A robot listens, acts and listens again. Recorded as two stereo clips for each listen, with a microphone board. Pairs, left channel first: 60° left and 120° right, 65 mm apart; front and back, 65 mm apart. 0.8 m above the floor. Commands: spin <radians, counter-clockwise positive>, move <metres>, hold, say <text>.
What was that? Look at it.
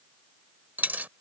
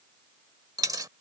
spin 3.14
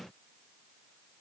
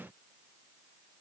say Facing where the dropped coin came from. I can't hear it now.